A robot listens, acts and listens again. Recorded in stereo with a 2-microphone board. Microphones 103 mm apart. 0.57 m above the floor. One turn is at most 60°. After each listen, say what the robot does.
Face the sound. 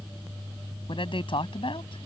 Turn 55° left.
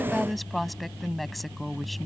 Found it: a woman speaking, straight ahead.